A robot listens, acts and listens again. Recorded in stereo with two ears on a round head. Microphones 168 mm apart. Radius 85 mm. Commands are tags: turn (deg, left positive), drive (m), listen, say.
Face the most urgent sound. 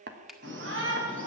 <turn deg="-90"/>
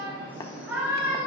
<turn deg="-10"/>
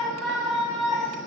<say>Facing the shout.</say>